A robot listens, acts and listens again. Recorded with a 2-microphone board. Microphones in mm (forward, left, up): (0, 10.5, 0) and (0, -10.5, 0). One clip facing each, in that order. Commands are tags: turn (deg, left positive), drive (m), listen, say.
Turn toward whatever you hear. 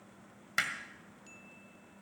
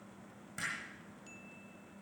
<turn deg="65"/>
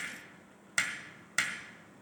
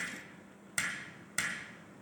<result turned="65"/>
<turn deg="25"/>
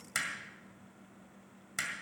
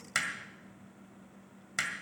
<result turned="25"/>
<turn deg="-15"/>
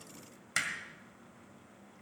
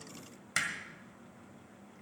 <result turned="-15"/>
<say>Found it: hammering, straight ahead.</say>